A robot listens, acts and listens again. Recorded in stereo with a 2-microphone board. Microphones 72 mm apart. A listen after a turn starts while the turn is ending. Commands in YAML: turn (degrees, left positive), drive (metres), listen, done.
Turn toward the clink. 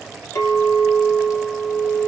turn: 45
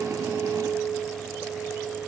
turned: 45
turn: 80
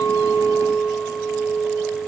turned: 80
done: "Found it: a clink, straight ahead, under 1 m away."